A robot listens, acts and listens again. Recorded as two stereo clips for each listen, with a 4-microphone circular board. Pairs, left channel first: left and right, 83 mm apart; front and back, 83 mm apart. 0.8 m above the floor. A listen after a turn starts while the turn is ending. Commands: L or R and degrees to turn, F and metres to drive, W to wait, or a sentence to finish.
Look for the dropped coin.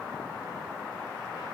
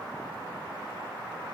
W
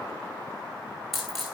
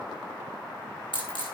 Found it: a dropped coin, straight ahead.